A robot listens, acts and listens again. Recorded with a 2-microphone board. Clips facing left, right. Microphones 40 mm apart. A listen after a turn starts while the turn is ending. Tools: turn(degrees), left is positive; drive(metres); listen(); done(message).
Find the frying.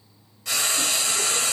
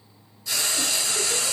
turn(degrees=65)
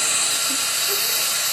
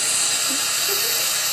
done("Found it: frying, straight ahead, under 1 m away.")